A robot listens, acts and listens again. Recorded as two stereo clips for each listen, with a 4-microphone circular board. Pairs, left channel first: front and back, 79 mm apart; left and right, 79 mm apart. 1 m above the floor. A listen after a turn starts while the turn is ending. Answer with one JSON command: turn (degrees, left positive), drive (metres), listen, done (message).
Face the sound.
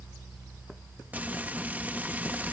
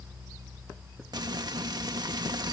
{"turn": -115}
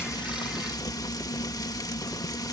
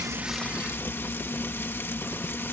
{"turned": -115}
{"turn": 30}
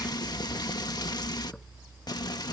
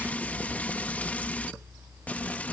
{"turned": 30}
{"turn": 20}
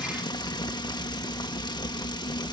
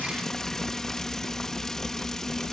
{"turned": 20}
{"done": "Found it: frying, straight ahead."}